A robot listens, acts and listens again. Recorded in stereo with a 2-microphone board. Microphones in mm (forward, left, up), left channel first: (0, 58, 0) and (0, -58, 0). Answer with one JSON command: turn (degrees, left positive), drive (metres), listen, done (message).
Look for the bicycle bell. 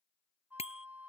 {"turn": 60}
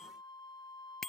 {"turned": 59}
{"done": "Found it: a bicycle bell, straight ahead."}